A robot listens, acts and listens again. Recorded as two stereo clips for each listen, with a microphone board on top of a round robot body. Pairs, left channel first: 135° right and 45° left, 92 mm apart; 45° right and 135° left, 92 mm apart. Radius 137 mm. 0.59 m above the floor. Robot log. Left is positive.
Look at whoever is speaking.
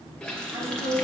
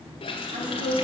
note: The woman speaking: 110° left.
cmd yaw +110
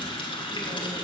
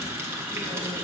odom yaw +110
cmd idle
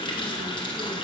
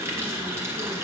cmd idle
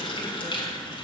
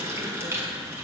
end: Facing where the woman speaking came from. I can't hear it now.